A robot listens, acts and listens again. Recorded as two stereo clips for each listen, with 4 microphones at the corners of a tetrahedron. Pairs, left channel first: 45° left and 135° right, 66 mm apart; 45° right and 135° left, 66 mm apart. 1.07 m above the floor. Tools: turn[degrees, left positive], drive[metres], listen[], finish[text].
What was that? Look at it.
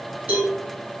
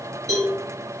Thought: The cowbell: 155° left.
Action: turn[155]
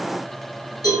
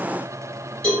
Thought: The cowbell is now 30° left.
Action: turn[30]
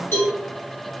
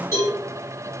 Action: finish[Facing the cowbell.]